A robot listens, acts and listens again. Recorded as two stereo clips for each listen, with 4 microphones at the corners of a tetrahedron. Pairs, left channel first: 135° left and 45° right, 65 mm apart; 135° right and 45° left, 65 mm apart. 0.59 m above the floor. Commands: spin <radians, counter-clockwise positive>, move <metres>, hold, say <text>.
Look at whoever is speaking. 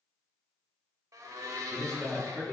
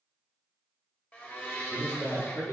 spin -2.71
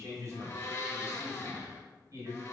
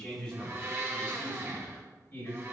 spin -1.40
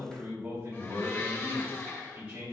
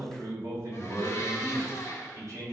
spin 0.17
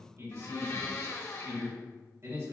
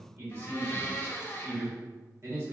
say Facing the man speaking, 2 to 4 m away.